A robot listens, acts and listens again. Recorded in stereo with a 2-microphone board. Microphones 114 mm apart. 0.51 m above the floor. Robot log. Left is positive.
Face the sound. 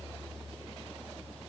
cmd idle
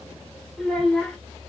cmd yaw +30
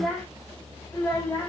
note: The child speaking: about 20° left or 160° left.
cmd yaw +20
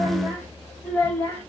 note: The child speaking: about 20° left or 160° left.
cmd yaw +20
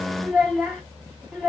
cmd yaw +30
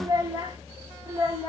note: So it is at 30° right.
cmd yaw -30
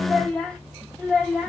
end: Facing the child speaking, 2 to 4 m away.